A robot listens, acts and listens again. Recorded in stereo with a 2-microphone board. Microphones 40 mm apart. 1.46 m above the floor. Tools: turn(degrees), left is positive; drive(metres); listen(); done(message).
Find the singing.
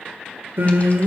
turn(degrees=-70)
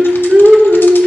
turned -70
turn(degrees=-25)
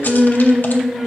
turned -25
turn(degrees=-10)
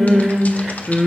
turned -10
done("Found it: singing, straight ahead.")